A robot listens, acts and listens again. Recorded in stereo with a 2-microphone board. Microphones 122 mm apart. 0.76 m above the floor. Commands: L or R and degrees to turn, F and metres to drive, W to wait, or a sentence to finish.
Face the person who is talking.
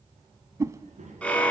R65
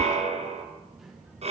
Facing the child speaking.